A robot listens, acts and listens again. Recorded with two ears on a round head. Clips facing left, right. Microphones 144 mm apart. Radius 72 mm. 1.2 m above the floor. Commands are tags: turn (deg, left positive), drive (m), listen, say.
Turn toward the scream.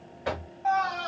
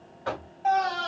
<turn deg="-35"/>
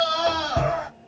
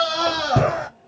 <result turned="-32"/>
<turn deg="-110"/>
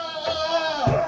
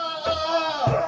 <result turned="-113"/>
<say>Facing the scream, 1 to 2 m away.</say>